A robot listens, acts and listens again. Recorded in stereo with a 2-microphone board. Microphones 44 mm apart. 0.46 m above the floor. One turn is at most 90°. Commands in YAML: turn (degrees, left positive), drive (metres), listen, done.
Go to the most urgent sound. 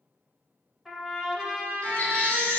turn: 30
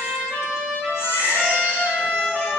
turn: 90
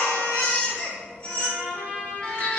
turn: 25
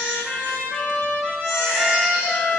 drive: 1.0
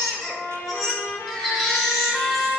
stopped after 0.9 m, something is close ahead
done: "Arrived at the baby crying, straight ahead."